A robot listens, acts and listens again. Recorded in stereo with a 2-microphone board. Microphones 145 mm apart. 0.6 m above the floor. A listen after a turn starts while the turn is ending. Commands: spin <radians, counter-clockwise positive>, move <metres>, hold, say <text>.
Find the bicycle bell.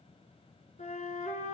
hold
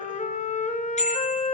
spin 0.87
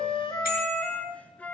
hold
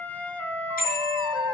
spin 1.40
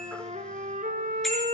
say Facing the bicycle bell, over 4 m away.